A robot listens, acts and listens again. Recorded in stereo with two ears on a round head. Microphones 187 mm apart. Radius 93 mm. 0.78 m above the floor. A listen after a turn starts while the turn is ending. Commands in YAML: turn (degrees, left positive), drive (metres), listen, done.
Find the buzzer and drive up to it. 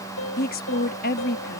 listen: true
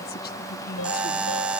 turn: -30
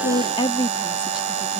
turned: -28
turn: -145
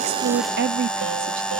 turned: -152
drive: 1.0
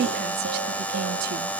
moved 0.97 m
turn: 10
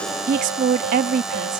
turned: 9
listen: true
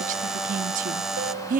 drive: 1.0
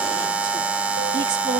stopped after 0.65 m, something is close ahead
done: "Arrived at the buzzer, straight ahead."